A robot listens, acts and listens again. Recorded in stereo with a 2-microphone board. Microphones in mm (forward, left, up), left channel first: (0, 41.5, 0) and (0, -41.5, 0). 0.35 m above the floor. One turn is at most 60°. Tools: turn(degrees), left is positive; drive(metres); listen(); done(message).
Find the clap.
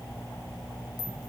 listen()
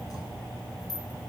listen()
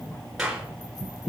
turn(degrees=-30)
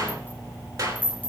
turn(degrees=-60)
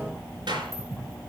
turn(degrees=-60)
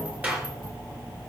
turn(degrees=-20)
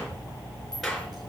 done("Found it: a clap, straight ahead, 2 to 4 m away.")